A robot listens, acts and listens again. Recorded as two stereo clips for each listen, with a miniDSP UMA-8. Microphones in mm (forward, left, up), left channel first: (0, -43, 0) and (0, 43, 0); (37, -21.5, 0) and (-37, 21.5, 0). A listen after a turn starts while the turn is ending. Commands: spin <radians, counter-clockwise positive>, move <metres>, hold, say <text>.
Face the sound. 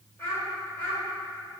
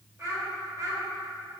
spin -2.88
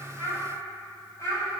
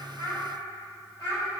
spin -1.05
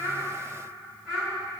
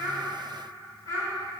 say Facing the child speaking.